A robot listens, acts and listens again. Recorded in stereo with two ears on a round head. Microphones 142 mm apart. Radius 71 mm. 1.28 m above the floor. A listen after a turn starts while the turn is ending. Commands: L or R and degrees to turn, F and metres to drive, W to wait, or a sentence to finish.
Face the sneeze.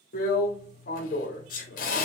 L55
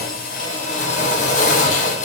W
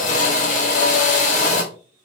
I heard a sneeze, but can't make it out now. It was about straight ahead or 70° left.